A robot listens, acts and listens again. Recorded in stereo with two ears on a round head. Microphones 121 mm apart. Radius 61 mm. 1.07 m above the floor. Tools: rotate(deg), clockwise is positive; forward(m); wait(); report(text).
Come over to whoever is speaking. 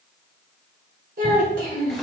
rotate(75)
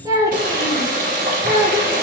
rotate(25)
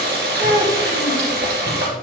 rotate(10)
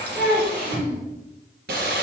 forward(1.0)
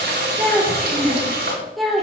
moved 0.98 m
forward(1.0)
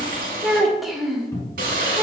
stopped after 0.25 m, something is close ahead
report("Arrived at the child speaking, straight ahead.")